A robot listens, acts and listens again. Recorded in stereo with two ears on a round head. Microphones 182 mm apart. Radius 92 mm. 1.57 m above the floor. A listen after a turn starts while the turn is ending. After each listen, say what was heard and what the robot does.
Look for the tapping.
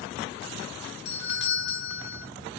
Keep listening.
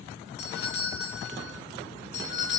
Keep listening.
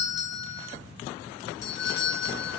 I can't make out tapping to turn to.